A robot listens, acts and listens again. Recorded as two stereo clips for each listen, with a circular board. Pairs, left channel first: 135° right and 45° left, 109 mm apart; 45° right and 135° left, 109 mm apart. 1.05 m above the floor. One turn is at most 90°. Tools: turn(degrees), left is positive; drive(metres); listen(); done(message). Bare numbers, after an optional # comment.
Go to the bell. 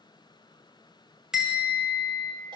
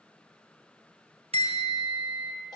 # The bell: 130° left.
turn(90)
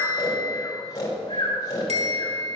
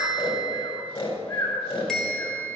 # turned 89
# The bell is now 40° left.
turn(40)
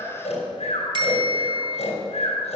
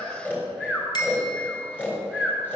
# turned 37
drive(1.0)
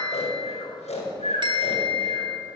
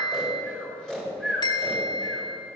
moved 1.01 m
drive(1.0)
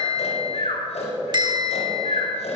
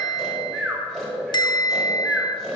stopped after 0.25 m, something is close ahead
done("I am next to the bell.")